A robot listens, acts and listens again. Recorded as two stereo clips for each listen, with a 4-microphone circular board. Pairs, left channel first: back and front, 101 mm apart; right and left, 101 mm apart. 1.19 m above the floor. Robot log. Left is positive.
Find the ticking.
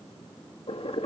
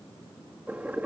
cmd idle
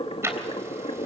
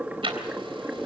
note: The ticking: 65° left.
cmd yaw +65
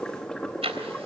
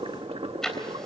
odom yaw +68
end: Found it: ticking, straight ahead.